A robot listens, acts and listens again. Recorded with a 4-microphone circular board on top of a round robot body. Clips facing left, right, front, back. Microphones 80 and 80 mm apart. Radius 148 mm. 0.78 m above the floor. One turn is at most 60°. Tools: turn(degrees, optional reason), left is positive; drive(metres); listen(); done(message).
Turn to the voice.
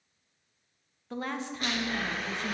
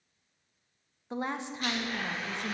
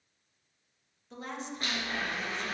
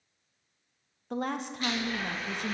turn(degrees=-60, reason="The woman speaking: 160° right.")
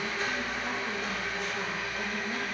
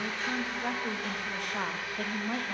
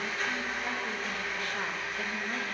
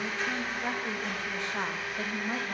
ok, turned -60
turn(degrees=-60, reason="The woman speaking is now 115° right.")
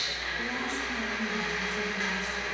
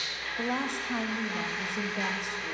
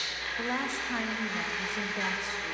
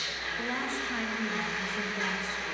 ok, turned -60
turn(degrees=-60, reason="The woman speaking is now 70° right.")
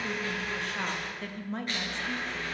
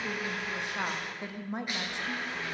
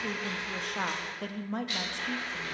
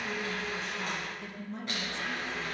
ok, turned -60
turn(degrees=-15, reason="The woman speaking is now 15° right.")
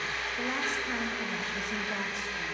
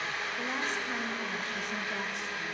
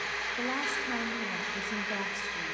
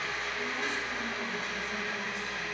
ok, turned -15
listen()
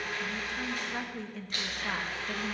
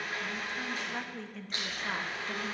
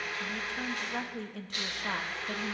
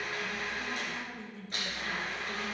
done("Found it: a woman speaking, straight ahead.")